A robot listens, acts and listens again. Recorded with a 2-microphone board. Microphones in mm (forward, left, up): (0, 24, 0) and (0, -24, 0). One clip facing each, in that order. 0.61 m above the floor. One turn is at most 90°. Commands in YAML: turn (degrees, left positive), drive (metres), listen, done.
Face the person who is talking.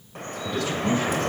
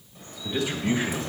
turn: -20
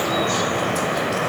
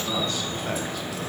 listen: true
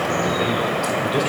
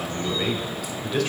turn: 10
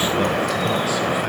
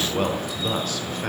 turn: 10
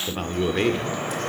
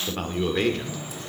turn: 10
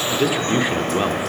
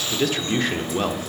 turn: 10
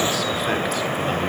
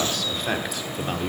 done: "Found it: a man speaking, straight ahead."